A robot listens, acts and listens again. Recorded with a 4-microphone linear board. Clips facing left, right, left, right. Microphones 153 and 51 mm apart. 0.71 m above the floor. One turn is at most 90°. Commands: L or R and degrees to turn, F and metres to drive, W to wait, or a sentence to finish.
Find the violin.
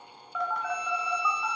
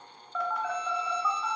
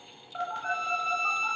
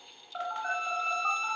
L70
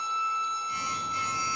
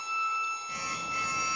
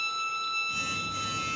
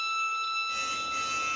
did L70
L35
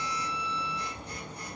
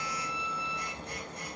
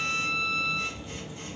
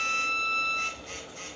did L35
L15
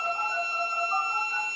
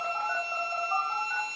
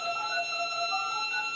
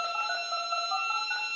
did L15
Found it: a violin, straight ahead.